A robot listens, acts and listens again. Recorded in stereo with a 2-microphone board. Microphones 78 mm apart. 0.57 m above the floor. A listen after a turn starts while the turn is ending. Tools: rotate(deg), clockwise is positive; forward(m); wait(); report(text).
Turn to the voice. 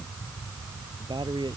rotate(90)
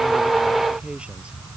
rotate(15)
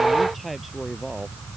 report("Found it: a man speaking, straight ahead.")